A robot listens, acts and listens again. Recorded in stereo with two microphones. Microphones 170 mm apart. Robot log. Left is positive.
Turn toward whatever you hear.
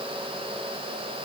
cmd idle
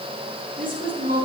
note: The woman speaking: about 55° right or 125° right.
cmd yaw -55
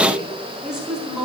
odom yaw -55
end: Facing the woman speaking.